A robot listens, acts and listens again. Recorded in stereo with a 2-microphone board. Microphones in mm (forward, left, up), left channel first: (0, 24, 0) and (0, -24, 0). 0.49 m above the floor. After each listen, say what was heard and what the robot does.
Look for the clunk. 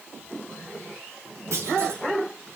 Turn 90° right.
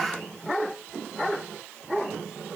Facing where the clunk came from. I can't hear it now.